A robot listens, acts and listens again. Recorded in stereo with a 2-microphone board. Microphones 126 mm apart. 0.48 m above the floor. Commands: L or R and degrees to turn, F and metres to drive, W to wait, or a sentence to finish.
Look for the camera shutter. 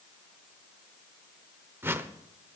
W
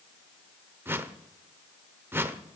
W
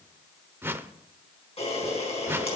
L55
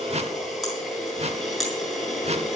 Facing the camera shutter, over 4 m away.